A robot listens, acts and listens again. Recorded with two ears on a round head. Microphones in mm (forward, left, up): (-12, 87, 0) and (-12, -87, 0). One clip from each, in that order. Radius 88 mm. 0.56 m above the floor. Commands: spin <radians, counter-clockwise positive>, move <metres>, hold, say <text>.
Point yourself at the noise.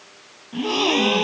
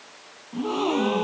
spin 1.57
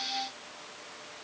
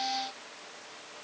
say I heard a gasp from this way, but can't make it out now.